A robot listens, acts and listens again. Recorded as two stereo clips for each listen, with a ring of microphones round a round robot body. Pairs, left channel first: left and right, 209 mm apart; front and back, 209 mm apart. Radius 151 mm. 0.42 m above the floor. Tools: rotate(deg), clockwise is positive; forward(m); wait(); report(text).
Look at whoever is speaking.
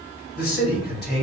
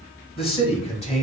rotate(-55)
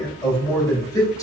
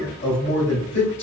rotate(-15)
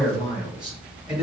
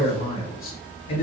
report("Found it: a man speaking, straight ahead.")